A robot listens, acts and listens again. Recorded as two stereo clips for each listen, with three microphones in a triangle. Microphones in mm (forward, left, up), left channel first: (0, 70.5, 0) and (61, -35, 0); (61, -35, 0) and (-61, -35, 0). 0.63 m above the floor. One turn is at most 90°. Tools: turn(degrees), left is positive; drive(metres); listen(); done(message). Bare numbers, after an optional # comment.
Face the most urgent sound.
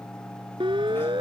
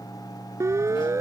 # The siren: 110° right.
turn(-90)
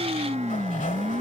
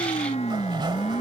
# The siren is now 30° right.
turn(-30)
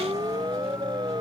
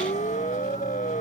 done("Facing the siren.")